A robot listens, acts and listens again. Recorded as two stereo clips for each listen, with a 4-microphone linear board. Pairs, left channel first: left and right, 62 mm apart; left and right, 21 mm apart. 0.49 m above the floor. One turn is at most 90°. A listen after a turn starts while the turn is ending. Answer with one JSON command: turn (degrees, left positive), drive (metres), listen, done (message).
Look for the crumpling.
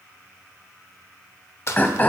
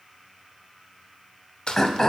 {"turn": 50}
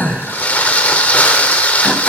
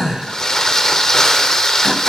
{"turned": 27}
{"turn": 30}
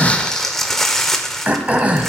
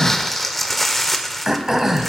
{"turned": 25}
{"done": "Facing the crumpling, under 1 m away."}